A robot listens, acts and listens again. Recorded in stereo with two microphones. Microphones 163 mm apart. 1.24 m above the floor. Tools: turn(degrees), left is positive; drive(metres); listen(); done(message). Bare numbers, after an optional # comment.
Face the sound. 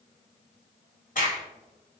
# The crack: about 55° left or 125° left.
turn(55)
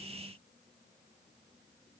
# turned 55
listen()
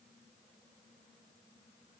done("I heard a crack, but can't make it out now. It was about straight ahead or 70° left.")